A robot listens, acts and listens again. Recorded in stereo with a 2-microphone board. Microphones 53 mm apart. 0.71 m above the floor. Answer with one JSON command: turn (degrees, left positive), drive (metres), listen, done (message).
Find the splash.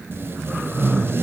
{"listen": true}
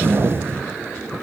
{"listen": true}
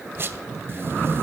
{"done": "I can't make out a splash to turn to."}